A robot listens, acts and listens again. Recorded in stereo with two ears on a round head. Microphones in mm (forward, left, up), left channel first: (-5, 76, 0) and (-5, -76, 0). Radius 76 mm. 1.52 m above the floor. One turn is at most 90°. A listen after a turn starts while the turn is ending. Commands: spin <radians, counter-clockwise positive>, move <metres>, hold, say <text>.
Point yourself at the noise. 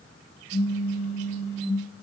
spin 0.70
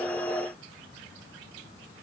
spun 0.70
hold
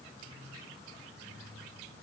say I heard a pop, but can't make it out now. It was about straight ahead or 100° left.